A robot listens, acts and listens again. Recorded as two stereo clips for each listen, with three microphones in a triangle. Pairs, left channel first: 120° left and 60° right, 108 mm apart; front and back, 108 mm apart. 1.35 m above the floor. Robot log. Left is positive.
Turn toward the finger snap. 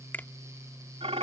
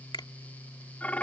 note: The finger snap: 45° left.
cmd yaw +45
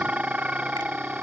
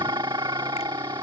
cmd idle
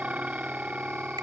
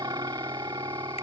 cmd idle
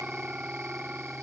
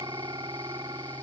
end: Facing where the finger snap came from. I can't hear it now.